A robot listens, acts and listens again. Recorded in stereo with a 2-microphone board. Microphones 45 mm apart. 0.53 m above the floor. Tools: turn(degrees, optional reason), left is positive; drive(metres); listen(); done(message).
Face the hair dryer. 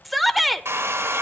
turn(degrees=-65, reason="The hair dryer: about 65° right or 115° right.")
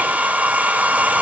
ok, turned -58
turn(degrees=-40, reason="So it is at 40° right.")
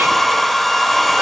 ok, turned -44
done("Found it: a hair dryer, straight ahead, 2 to 4 m away.")